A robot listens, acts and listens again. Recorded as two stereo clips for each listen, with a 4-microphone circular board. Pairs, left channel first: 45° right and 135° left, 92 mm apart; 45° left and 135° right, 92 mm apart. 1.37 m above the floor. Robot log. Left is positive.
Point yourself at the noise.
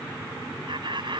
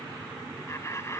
note: The laughter: 105° left.
cmd yaw +105
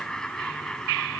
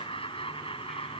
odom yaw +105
note: The laughter is now 40° left.
cmd yaw +40
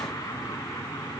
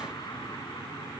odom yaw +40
cmd idle
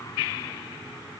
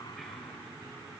cmd idle
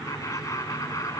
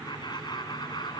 note: The laughter is now 10° left.
cmd yaw +10
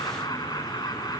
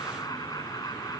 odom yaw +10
end: Facing the laughter.